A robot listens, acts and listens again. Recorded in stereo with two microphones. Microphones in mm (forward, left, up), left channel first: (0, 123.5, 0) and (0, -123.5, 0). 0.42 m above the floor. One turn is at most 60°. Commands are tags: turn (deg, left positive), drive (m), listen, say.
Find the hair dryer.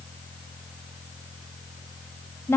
<listen/>
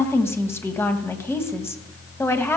<listen/>
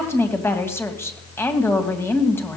<say>I can't make out a hair dryer to turn to.</say>